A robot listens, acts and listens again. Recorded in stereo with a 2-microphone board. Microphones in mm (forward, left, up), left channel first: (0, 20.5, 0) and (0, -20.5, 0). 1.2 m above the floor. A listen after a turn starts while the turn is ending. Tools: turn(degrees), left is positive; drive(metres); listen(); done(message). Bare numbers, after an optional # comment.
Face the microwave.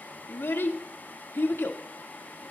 listen()
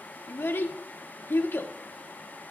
listen()
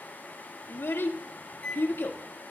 # The microwave: about 30° left or 150° left.
turn(30)
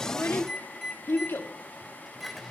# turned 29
done("Facing the microwave, 2 to 4 m away.")